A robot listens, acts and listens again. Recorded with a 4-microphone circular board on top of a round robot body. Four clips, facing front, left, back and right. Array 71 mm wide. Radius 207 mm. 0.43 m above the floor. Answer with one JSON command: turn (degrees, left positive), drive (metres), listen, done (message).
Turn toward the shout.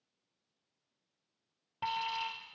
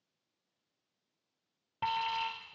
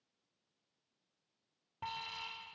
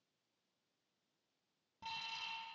{"listen": true}
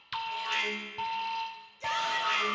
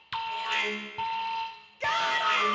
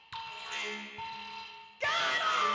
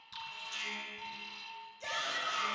{"turn": 130}
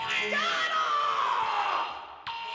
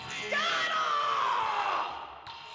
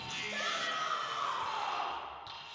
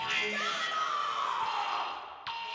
{"turn": 40}
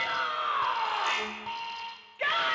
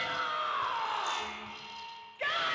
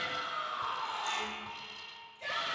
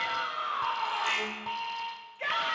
{"done": "Found it: a shout, straight ahead, 2 to 4 m away."}